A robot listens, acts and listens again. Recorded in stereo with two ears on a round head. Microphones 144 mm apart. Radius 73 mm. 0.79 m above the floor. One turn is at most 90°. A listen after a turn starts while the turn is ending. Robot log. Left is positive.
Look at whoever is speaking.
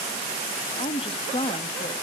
note: The woman speaking: about 35° left or 145° left.
cmd yaw +35
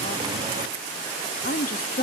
note: So it is at 100° left.
cmd yaw +90
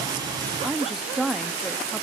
end: Facing the woman speaking, under 1 m away.